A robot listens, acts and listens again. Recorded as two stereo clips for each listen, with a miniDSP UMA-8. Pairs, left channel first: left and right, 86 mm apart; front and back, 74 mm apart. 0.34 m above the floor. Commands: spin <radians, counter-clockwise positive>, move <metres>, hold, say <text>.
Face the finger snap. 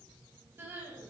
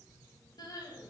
hold
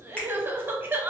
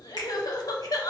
spin 0.26
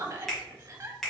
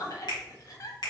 say Found it: a finger snap, straight ahead.